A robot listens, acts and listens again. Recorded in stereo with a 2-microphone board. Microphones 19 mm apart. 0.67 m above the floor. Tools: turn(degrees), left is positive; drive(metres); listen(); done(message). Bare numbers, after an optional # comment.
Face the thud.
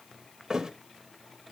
# The thud: about 40° right or 140° right.
turn(-40)
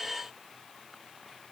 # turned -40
listen()
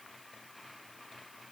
done("I heard a thud, but can't make it out now. It was about straight ahead or 100° right.")